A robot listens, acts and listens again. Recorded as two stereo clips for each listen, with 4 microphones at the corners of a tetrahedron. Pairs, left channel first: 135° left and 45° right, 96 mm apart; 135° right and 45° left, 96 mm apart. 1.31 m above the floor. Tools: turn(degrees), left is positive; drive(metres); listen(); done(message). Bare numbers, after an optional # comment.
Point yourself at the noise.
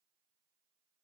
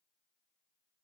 listen()
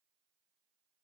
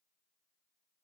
listen()
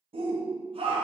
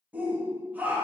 # The shout: 30° right.
turn(-30)
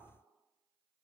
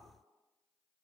listen()
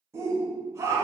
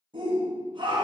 # The shout is now 15° left.
turn(15)
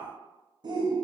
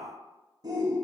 done("Found it: a shout, straight ahead, under 1 m away.")